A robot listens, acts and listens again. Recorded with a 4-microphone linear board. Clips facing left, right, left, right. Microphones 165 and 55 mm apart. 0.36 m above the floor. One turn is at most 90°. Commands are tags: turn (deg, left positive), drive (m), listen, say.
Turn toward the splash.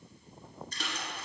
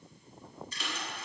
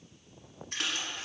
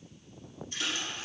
<turn deg="50"/>
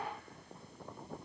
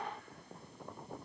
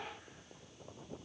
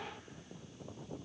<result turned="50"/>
<listen/>
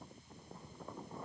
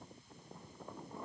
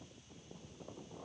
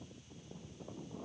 <say>I heard a splash, but can't make it out now. It was about straight ahead or 80° left.</say>